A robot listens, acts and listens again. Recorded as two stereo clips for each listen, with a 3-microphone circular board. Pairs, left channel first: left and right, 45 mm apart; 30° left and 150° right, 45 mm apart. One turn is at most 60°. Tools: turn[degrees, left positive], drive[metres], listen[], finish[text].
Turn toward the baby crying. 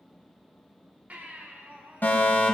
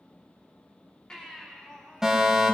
Thought: The baby crying: 40° right.
Action: turn[-40]
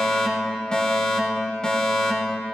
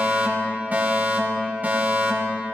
Action: listen[]
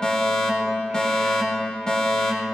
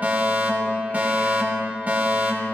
Action: listen[]
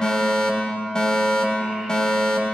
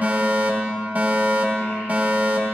Action: finish[I heard a baby crying from this way, but can't make it out now.]